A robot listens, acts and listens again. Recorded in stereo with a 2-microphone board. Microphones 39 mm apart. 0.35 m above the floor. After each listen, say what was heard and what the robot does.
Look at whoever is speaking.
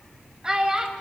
The child speaking: about 20° right or 160° right. Turn 20° right.
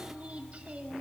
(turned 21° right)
Keep listening.
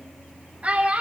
So it is at 135° right. Turn 135° right.
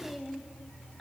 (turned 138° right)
Found it: a child speaking, straight ahead.